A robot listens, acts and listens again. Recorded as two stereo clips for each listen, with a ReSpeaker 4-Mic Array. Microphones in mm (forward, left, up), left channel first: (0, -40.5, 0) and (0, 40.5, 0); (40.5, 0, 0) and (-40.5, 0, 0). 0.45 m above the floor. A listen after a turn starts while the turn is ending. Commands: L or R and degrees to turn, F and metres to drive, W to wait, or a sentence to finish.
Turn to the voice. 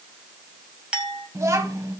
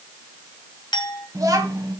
L140
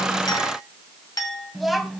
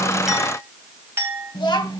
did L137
Facing the child speaking.